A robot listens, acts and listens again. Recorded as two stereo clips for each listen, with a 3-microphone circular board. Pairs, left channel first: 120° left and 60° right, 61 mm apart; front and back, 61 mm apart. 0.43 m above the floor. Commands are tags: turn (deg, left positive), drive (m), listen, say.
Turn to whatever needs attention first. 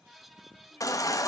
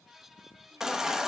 <turn deg="100"/>
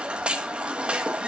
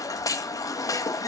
<turn deg="10"/>
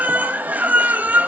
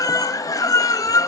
<say>Found it: a baby crying, straight ahead.</say>